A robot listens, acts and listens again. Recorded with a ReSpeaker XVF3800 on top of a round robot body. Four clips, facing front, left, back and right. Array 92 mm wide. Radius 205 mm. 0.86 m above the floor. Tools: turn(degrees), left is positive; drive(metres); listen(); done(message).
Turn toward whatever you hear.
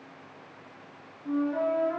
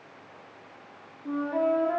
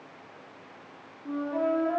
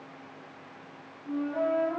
turn(degrees=100)
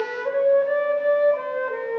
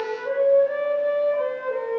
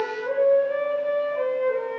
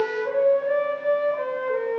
done("Found it: a flute, straight ahead, 1 to 2 m away.")